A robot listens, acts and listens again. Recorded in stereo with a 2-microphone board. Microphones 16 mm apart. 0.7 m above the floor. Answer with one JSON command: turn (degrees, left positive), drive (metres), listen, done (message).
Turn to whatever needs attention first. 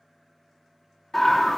{"turn": 20}
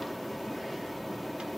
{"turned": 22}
{"done": "Found it: a scream, straight ahead, 1 to 2 m away."}